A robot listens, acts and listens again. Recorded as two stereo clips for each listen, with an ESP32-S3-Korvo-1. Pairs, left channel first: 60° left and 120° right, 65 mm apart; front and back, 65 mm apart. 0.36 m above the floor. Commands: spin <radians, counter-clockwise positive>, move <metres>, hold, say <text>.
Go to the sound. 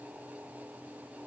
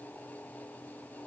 hold
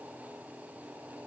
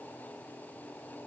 hold
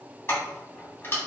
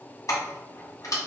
spin 0.26
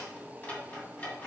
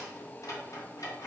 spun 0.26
move 1.0
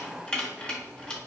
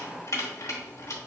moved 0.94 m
spin -0.17
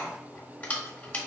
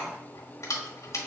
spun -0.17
move 1.0
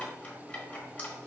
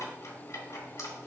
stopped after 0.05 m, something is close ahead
hold
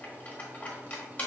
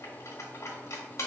say I am next to the keys jangling.